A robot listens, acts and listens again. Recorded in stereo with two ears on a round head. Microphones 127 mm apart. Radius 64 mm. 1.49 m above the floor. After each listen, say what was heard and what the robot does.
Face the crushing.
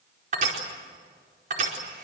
The crushing: about 60° right or 120° right. Turn 60° right.
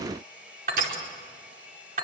So it is at 60° right. Turn 60° right.
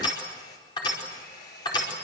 The crushing is now 30° left. Turn 30° left.
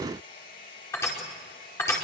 The crushing is now 20° left. Turn 20° left.
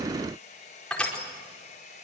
Found it: crushing, straight ahead, over 4 m away.